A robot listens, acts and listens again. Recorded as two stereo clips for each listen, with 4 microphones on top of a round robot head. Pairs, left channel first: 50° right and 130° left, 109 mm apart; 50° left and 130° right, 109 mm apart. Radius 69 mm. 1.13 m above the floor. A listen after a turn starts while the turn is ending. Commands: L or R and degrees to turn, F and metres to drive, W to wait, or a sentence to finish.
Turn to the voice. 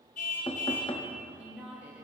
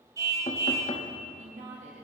R150
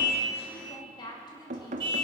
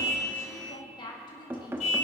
Found it: a woman speaking, straight ahead.